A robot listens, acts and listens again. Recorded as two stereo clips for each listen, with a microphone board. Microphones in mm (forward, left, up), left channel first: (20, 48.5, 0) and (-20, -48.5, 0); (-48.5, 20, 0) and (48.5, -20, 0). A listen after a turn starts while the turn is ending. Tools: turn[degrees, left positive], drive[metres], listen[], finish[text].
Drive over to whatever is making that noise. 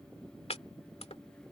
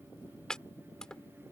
Thought: The chopping: 75° left.
Action: turn[75]
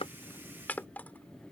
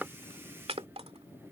Action: drive[1.0]
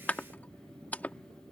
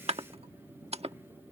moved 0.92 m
Thought: The chopping is now 10° right.
Action: turn[-10]
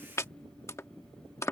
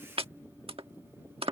Action: drive[1.0]
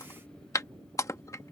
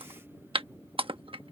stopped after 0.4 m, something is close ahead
Thought: The chopping is now 10° left.
Action: turn[10]
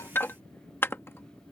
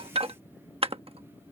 Action: finish[I am next to the chopping.]